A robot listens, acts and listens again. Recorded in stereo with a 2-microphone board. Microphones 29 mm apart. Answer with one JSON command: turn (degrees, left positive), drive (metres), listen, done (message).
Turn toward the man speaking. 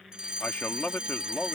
{"turn": 75}
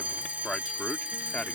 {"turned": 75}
{"turn": 45}
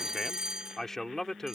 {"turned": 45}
{"turn": 15}
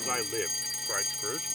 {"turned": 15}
{"done": "Found it: a man speaking, straight ahead."}